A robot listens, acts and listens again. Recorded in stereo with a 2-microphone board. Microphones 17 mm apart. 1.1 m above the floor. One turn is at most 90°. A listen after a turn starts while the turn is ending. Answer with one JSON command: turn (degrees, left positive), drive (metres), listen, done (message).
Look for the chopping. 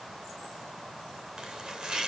{"turn": -45}
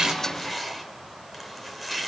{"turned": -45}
{"done": "Found it: chopping, straight ahead, 2 to 4 m away."}